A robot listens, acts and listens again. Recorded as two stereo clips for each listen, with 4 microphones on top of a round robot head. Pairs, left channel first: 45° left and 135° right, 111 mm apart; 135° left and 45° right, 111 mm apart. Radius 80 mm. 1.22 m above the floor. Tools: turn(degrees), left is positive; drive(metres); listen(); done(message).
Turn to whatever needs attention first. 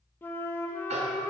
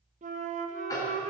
listen()
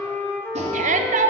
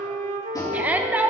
turn(degrees=-120)
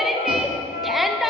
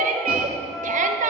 turn(degrees=-45)
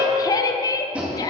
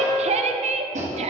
turn(degrees=-15)
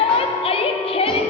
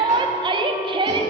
done("Facing the shout, under 1 m away.")